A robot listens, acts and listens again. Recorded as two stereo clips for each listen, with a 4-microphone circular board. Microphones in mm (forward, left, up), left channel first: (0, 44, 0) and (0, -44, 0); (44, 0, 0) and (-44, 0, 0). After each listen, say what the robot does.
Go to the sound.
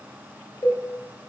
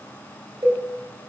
Turn 135° left.
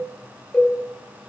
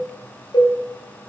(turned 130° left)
Drive 1.0 m forward.
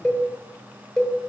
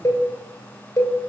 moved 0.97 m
Turn 10° left.
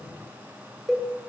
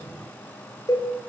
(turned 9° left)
Drive 1.0 m forward.
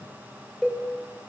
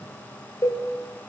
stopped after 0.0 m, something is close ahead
Arrived at the cowbell, straight ahead.